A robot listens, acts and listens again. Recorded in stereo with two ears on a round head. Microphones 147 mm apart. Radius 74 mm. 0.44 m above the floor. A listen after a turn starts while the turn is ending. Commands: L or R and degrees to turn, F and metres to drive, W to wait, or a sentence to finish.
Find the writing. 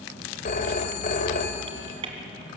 W
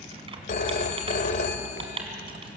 W
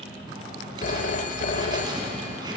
R25
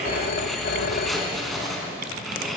Found it: writing, straight ahead, over 4 m away.